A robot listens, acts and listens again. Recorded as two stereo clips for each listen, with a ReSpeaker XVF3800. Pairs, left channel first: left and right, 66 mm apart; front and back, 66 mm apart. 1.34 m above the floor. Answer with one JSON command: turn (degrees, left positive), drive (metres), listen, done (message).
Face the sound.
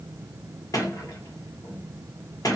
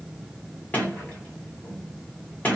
{"turn": 65}
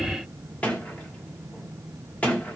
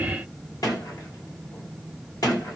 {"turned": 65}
{"turn": 20}
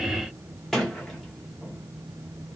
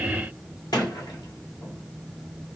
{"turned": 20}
{"done": "Facing the sliding door."}